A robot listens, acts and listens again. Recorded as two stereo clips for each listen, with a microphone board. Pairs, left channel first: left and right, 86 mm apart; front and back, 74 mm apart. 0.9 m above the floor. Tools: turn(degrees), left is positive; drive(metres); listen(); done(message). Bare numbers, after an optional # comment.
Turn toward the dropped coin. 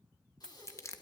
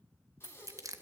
# The dropped coin: 10° left.
turn(10)
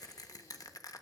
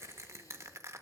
done("Facing where the dropped coin came from. I can't hear it now.")